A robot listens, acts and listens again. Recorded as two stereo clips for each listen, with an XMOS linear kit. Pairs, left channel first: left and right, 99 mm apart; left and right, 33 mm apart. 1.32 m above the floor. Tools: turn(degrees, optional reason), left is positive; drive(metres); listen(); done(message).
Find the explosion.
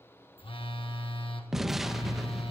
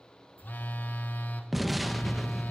turn(degrees=30)
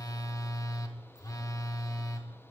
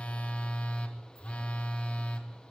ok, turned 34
listen()
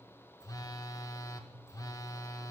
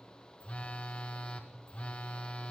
done("I heard an explosion, but can't make it out now. It was about 35° right or 150° left.")